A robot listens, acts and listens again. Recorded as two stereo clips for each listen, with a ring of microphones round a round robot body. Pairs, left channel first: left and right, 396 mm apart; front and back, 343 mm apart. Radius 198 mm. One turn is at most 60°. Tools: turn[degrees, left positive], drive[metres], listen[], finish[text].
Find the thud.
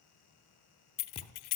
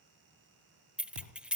Thought: The thud: 170° left.
Action: turn[60]
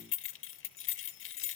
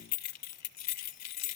Thought: Nothing new. It was at 110° left.
Action: turn[60]
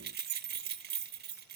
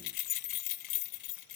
Thought: Nothing new. It was at 50° left.
Action: turn[50]
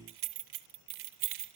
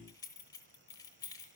Action: finish[I heard a thud from this way, but can't make it out now.]